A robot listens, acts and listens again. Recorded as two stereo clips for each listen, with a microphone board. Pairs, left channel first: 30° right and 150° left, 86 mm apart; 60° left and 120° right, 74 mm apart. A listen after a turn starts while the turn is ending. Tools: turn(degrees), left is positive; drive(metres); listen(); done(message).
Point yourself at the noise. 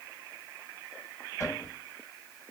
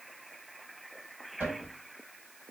turn(degrees=-65)
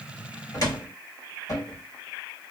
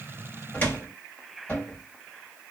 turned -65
done("Found it: a cupboard door, straight ahead.")